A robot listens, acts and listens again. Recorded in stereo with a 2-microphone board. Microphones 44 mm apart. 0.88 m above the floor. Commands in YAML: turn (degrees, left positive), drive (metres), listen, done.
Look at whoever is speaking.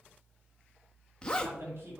turn: -70
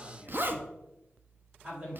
turn: -30
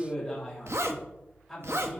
done: "Found it: a man speaking, straight ahead."